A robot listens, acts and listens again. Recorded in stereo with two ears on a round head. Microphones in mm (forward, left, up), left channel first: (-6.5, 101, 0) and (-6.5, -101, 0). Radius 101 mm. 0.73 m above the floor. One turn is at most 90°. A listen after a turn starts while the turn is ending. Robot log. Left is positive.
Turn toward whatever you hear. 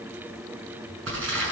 note: The crumpling: about 60° right or 120° right.
cmd yaw -60
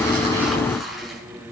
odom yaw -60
end: Facing the crumpling, over 4 m away.